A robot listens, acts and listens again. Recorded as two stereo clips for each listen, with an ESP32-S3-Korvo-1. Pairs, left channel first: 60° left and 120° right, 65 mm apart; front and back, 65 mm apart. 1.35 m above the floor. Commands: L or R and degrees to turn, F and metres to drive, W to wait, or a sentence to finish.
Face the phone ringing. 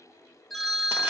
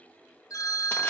R30
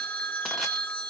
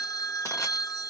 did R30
Found it: a phone ringing, straight ahead.